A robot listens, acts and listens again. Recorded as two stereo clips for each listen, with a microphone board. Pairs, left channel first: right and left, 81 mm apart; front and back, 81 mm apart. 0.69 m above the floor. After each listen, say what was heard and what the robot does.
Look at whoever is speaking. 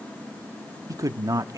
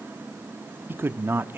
The man speaking: 120° left. Turn 120° left.
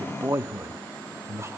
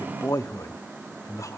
The man speaking is now 40° left. Turn 40° left.
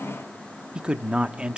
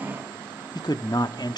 The man speaking is now 10° left. Turn 10° left.
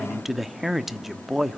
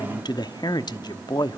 Found it: a man speaking, straight ahead.